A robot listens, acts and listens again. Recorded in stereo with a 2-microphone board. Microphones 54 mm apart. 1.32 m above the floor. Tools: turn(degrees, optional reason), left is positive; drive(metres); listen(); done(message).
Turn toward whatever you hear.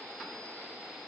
listen()
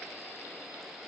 listen()
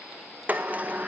turn(degrees=-30, reason="The sliding door: about 30° right or 150° right.")
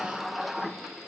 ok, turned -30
done("Facing the sliding door, 1 to 2 m away.")